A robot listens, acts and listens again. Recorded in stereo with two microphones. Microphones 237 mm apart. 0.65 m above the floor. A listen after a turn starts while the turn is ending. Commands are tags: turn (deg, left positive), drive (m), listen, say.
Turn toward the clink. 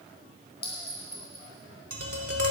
<turn deg="45"/>
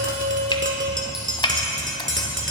<listen/>
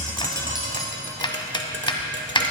<listen/>
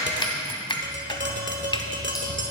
<say>I heard a clink, but can't make it out now. It was about straight ahead or 90° left.</say>